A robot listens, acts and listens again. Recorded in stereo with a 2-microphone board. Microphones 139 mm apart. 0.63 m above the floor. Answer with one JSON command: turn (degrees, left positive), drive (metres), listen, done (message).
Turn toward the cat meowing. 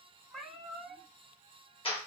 {"turn": -30}
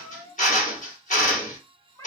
{"turn": 25}
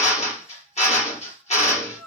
{"done": "Found it: a cat meowing, straight ahead."}